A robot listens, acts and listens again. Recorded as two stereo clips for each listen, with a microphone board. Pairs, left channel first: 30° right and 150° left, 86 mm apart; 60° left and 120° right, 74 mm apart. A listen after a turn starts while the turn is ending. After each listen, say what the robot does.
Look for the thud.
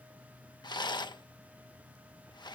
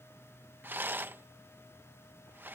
Keep listening.
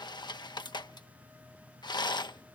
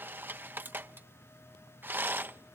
Keep listening.
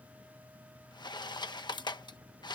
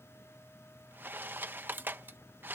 I can't make out a thud, only a rattle.